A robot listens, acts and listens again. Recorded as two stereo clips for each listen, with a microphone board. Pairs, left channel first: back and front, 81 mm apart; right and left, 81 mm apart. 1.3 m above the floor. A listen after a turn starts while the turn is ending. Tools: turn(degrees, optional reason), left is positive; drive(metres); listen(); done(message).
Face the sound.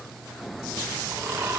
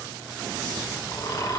turn(degrees=-60, reason="The snoring: 60° right.")
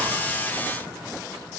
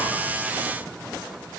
listen()
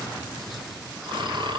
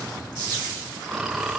done("Facing the snoring.")